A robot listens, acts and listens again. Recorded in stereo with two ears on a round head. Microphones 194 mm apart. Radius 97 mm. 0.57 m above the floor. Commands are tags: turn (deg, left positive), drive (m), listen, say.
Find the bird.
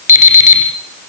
<listen/>
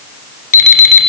<listen/>
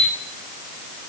<say>I can't make out a bird to turn to.</say>